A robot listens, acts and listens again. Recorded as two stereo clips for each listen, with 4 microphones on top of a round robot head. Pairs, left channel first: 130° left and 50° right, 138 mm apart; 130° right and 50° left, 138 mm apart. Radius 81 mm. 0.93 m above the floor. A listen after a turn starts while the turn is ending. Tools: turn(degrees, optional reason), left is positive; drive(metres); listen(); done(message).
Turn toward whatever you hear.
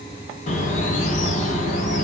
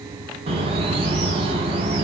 turn(degrees=100, reason="The bird: 100° left.")
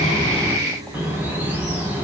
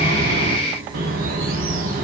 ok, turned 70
turn(degrees=30, reason="The bird is now 30° left.")
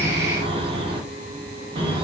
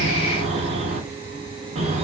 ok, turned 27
done("Found it: a bird, straight ahead, under 1 m away.")